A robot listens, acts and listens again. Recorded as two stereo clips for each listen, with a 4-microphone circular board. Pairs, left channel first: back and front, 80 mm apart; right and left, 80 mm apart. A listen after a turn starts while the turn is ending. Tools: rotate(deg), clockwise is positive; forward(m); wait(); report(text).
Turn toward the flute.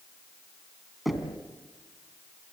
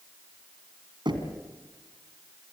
wait()
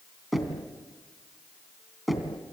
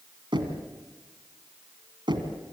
wait()
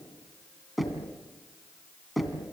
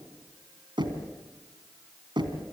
report("I can't make out a flute to turn to.")